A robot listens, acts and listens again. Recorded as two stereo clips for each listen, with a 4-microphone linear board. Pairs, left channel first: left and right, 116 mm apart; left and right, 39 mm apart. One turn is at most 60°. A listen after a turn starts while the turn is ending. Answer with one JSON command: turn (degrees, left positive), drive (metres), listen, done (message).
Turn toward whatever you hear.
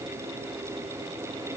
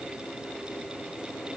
{"listen": true}
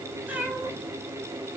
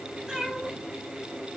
{"turn": -30}
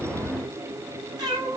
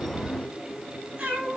{"turn": -60}
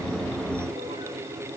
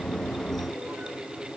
{"turn": -60}
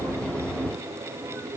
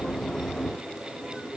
{"turn": -25}
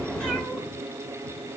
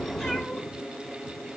{"done": "I heard a cat meowing from this way, but can't make it out now."}